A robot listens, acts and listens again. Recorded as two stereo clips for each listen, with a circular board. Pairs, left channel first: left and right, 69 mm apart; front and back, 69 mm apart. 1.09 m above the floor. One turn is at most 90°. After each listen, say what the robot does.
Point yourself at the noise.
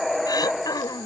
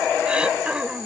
Turn 90° left.
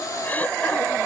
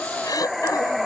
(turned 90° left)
Turn 25° left.
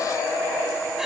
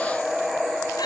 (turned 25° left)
Keep listening.
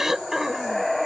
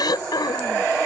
Found it: throat clearing, straight ahead.